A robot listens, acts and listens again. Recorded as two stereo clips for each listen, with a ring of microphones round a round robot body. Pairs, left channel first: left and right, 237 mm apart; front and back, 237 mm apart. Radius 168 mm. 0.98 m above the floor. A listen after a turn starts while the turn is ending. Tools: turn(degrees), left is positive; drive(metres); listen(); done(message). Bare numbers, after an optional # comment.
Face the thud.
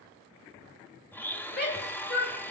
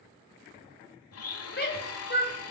listen()
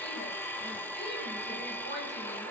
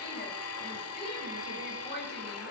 listen()
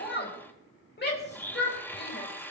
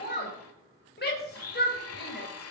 done("I can't make out a thud, only a blender and a shout.")